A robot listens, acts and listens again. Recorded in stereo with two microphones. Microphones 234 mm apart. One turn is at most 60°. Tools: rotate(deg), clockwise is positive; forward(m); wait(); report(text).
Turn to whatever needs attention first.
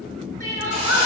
rotate(-60)
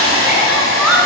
report("Found it: crying, straight ahead, 1 to 2 m away.")